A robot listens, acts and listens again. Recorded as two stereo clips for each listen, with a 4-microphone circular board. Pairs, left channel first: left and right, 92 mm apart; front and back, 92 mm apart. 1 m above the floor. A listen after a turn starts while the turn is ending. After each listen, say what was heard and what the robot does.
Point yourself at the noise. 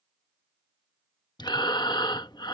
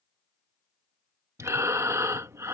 The breathing: 125° left. Turn 125° left.
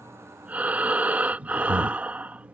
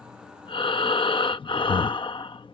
The breathing is now 20° right. Turn 20° right.
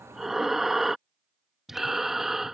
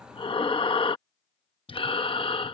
Found it: breathing, straight ahead.